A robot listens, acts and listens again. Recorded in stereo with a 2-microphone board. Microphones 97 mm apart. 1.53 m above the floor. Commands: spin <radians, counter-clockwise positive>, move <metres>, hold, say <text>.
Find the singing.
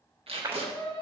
spin 0.52
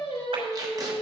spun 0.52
spin 2.09
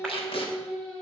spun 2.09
spin 0.17
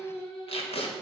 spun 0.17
say Facing the singing, over 4 m away.